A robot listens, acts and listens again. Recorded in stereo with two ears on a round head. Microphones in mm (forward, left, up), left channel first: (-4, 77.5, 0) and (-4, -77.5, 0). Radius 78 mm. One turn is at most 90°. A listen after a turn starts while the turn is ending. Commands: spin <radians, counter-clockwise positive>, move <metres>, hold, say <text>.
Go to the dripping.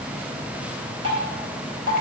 spin -0.70
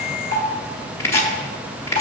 spin -1.57
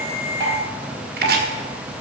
spin -0.17
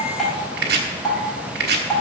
move 1.0
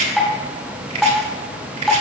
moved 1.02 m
move 1.0
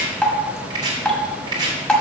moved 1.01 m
spin 0.17
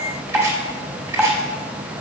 move 1.0
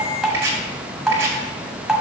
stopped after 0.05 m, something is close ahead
say I am next to the dripping.